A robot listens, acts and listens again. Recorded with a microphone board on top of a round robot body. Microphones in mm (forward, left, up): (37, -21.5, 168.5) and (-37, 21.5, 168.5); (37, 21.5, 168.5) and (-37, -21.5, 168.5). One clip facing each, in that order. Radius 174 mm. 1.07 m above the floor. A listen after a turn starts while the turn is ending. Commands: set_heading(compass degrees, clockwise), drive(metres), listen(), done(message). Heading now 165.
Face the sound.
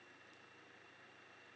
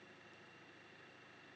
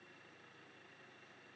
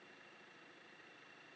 listen()
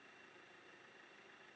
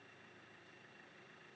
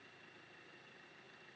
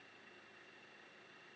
listen()
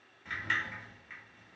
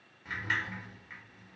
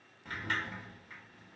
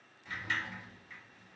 set_heading(100)
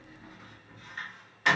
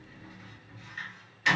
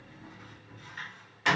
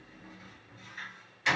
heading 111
set_heading(101)
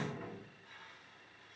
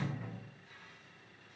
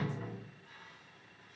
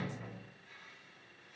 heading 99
done("Found it: a sliding door, straight ahead, 1 to 2 m away.")